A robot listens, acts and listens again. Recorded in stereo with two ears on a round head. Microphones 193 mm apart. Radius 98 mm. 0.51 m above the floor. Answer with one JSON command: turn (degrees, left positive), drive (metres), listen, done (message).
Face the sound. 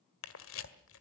{"turn": 70}
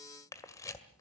{"turn": 15}
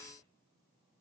{"listen": true}
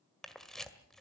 {"done": "Facing the camera shutter, 1 to 2 m away."}